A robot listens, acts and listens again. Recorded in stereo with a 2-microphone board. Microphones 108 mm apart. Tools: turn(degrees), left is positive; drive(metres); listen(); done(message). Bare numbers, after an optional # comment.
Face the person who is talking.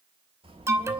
# The child speaking: about 65° right or 115° right.
turn(-65)
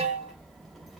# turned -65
done("Facing the child speaking, 2 to 4 m away.")